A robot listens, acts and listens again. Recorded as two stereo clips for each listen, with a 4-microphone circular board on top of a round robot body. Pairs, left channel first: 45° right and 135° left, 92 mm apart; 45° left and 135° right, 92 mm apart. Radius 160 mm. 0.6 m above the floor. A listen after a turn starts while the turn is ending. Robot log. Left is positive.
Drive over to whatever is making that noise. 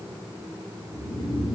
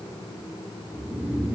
note: The snoring: 55° right.
cmd yaw -55
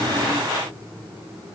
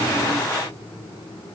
cmd idle
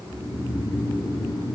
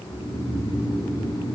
cmd fwd 1.0
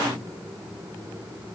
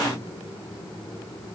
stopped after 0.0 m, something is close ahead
cmd idle
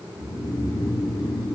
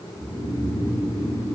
end: Something is in my way. I am facing the snoring but have not reached it.